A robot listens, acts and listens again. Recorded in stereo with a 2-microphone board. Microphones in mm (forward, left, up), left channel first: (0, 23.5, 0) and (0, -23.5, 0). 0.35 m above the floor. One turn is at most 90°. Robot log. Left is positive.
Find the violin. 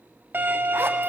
note: The violin: about 50° right or 130° right.
cmd yaw -50
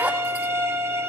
note: So it is at 80° right.
cmd yaw -80
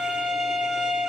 note: The violin is now 15° right.
cmd yaw -15
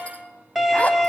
end: Found it: a violin, straight ahead.